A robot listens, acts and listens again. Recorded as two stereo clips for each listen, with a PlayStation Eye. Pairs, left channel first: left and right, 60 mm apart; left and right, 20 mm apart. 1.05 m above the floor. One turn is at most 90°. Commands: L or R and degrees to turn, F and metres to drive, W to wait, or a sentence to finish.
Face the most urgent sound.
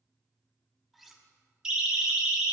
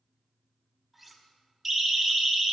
R30
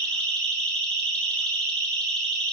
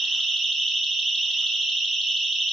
L15
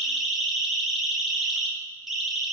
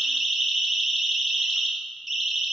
Found it: a siren, straight ahead, 2 to 4 m away.